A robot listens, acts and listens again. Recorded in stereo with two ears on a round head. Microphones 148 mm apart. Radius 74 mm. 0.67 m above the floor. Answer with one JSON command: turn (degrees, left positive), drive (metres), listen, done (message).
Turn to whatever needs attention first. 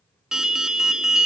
{"turn": -30}
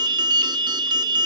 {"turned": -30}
{"turn": -145}
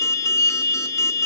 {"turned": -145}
{"turn": 20}
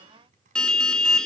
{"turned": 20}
{"done": "Facing the alarm, 1 to 2 m away."}